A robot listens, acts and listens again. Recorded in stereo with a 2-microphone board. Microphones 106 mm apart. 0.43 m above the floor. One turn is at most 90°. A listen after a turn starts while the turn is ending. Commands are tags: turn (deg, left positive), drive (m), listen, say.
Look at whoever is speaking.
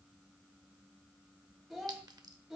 <turn deg="-30"/>
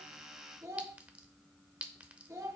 <turn deg="-90"/>
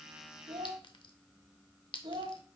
<turn deg="-65"/>
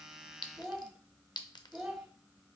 <say>Found it: a child speaking, straight ahead, 2 to 4 m away.</say>